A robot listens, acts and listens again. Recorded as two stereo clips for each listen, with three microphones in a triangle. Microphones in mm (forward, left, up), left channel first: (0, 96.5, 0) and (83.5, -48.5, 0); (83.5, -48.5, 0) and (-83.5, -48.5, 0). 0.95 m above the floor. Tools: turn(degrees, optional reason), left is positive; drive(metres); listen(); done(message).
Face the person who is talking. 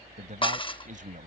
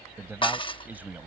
turn(degrees=-100, reason="The man speaking: 100° right.")
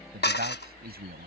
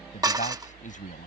turn(degrees=-40, reason="The man speaking is now 40° right.")
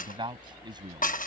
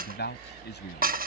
done("Facing the man speaking.")